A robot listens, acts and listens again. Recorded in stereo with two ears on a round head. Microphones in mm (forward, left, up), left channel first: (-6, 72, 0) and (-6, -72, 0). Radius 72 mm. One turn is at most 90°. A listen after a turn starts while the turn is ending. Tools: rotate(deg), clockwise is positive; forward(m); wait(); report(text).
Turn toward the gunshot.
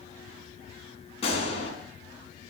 rotate(-40)
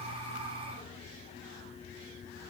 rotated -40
wait()
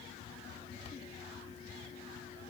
report("I heard a gunshot, but can't make it out now. It was about straight ahead or 100° left.")